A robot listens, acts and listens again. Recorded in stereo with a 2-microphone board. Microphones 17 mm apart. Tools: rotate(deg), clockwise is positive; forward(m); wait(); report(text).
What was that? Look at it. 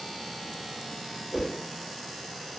rotate(-15)
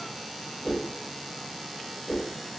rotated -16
report("Facing the whoosh.")